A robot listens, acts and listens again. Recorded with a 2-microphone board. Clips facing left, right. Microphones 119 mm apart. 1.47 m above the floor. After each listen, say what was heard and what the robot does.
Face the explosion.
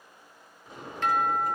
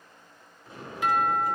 Turn 30° left.
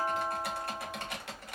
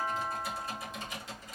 Keep listening.
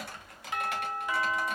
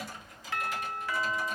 I heard an explosion, but can't make it out now. It was about 15° right or 135° left.